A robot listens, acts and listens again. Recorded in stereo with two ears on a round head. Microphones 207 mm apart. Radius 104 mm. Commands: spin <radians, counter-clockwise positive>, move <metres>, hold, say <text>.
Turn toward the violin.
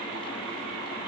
hold
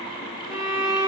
spin -0.52
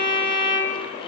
spin -2.36
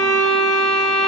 spin 0.17
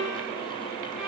say Found it: a violin, straight ahead, under 1 m away.